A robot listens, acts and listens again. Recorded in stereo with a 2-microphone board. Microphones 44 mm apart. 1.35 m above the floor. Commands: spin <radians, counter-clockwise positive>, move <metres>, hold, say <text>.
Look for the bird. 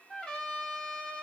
hold
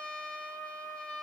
hold
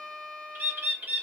spin -0.96
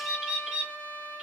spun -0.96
spin -0.35
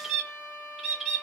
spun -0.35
say Facing the bird.